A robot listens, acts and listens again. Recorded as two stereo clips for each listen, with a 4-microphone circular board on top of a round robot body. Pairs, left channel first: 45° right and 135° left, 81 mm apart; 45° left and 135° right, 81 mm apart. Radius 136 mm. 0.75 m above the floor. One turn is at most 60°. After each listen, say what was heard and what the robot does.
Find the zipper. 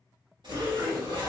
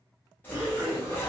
The zipper: 110° left. Turn 60° left.
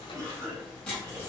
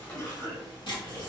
The zipper is now 35° left. Turn 35° left.
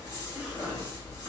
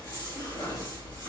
Facing the zipper.